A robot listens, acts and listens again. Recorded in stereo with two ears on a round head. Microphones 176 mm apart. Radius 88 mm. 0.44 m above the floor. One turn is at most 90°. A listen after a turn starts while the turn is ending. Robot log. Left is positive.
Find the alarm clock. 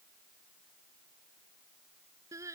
cmd idle
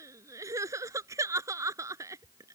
cmd idle
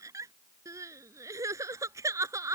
end: I can't make out an alarm clock, only crying.